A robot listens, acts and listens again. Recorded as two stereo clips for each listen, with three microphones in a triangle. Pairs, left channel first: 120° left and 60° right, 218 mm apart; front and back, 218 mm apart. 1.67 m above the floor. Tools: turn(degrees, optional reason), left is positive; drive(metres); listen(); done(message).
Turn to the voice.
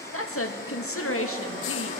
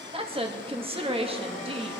turn(degrees=120, reason="The woman speaking: 120° left.")
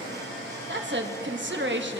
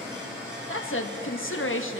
turn(degrees=-25, reason="The woman speaking is now 25° right.")
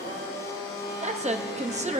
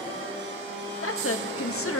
done("Facing the woman speaking.")